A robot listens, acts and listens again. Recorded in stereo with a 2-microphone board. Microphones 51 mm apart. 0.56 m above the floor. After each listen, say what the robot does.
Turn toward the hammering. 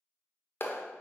Keep listening.
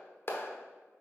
Keep listening.
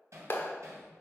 Turn 65° right.
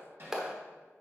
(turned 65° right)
Turn 45° right.
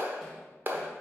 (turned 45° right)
Keep listening.
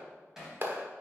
Facing the hammering.